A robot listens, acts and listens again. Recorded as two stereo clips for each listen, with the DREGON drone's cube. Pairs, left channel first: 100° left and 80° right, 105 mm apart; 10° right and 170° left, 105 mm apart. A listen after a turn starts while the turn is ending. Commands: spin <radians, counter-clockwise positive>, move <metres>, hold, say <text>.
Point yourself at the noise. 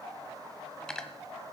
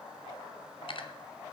spin 0.35
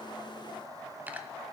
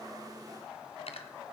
say Found it: cutlery clinking, straight ahead.